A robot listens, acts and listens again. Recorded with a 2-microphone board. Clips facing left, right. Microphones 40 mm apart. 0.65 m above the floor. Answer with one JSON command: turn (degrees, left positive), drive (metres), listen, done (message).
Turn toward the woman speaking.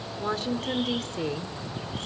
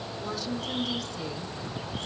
{"turn": 50}
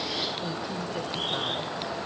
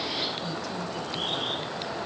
{"listen": true}
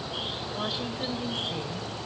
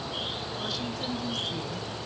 {"listen": true}
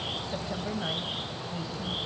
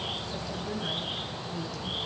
{"turn": 40}
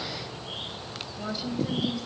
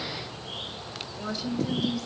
{"turn": 10}
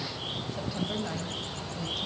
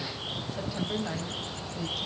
{"done": "Facing the woman speaking, 2 to 4 m away."}